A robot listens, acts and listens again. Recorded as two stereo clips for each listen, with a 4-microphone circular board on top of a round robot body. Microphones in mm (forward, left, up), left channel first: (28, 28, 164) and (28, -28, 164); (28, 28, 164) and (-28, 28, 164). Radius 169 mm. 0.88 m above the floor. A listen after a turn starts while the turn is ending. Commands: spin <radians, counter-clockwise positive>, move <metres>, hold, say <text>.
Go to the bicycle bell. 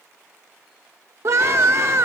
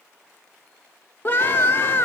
hold
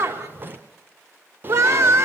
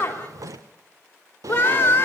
hold
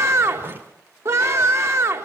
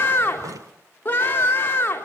say I can't make out a bicycle bell to turn to.